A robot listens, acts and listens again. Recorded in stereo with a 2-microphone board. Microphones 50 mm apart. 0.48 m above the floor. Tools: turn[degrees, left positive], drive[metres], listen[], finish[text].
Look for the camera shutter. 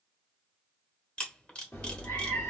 Thought: The camera shutter: about 25° left or 155° left.
Action: turn[25]
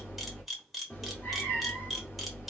Action: finish[Found it: a camera shutter, straight ahead.]